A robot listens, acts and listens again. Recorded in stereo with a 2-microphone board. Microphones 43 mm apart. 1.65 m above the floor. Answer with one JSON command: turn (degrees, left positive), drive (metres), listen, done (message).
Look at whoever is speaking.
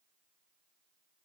{"listen": true}
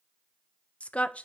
{"turn": 30}
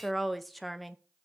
{"done": "Found it: a woman speaking, straight ahead, under 1 m away."}